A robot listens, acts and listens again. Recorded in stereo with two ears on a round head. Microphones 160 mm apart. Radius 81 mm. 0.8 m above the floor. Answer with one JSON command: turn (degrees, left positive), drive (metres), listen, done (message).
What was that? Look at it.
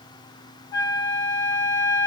{"turn": 25}
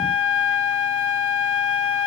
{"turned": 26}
{"turn": 130}
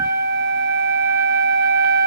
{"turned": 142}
{"turn": -15}
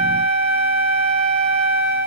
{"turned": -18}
{"done": "Found it: a flute, straight ahead, 2 to 4 m away."}